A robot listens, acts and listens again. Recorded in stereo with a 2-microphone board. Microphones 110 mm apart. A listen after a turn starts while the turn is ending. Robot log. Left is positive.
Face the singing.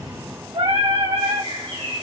note: The singing: about 60° right or 120° right.
cmd yaw -60
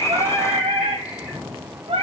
note: So it is at 65° right.
cmd yaw -65
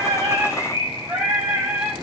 note: The singing is now 10° right.
cmd yaw -10
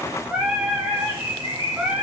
note: The singing is now 10° right.
cmd yaw -10
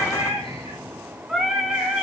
end: Found it: singing, straight ahead, over 4 m away.